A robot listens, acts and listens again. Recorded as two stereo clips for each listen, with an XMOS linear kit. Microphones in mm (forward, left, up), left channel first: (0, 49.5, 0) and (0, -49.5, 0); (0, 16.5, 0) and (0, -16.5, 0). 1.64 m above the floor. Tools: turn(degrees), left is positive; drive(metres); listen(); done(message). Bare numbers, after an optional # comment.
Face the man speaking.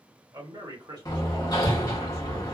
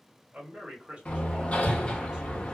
# The man speaking: about 40° right or 140° right.
turn(-40)
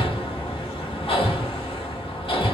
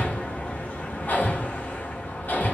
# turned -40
listen()
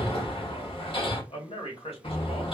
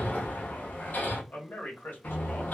# So it is at 65° left.
turn(65)
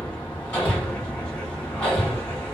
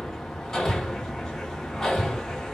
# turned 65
listen()
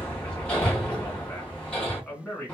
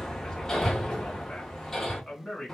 # The man speaking is now 10° left.
turn(10)
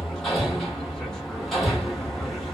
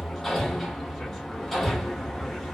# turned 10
listen()
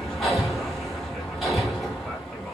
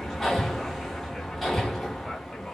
listen()
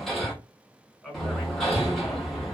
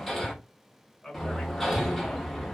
done("Facing the man speaking, 1 to 2 m away.")